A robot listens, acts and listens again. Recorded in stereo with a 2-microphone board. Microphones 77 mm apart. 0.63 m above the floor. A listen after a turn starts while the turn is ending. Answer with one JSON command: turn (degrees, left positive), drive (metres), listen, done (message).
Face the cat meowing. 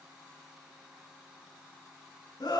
{"listen": true}
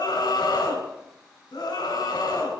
{"listen": true}
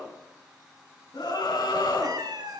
{"turn": -65}
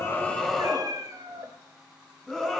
{"turn": -50}
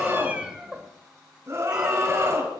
{"turn": -10}
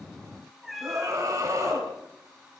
{"done": "Found it: a cat meowing, straight ahead."}